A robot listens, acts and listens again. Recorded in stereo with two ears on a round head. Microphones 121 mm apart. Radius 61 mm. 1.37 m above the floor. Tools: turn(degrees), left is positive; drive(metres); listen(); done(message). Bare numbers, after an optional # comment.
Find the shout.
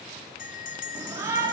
# The shout: about 20° right or 160° right.
turn(-20)
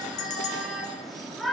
done("Found it: a shout, straight ahead.")